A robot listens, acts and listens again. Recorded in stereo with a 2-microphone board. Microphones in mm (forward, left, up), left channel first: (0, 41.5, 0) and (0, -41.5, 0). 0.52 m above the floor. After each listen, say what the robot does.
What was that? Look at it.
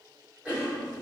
Turn 30° right.
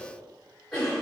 Turn 20° left.
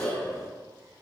Facing the cough, 1 to 2 m away.